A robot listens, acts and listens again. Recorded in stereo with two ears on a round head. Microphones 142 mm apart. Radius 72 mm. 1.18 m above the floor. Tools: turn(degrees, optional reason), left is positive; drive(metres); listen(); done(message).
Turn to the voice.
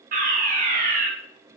listen()
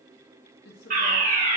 turn(degrees=90)
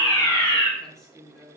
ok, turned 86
done("Found it: a woman speaking, straight ahead, 1 to 2 m away.")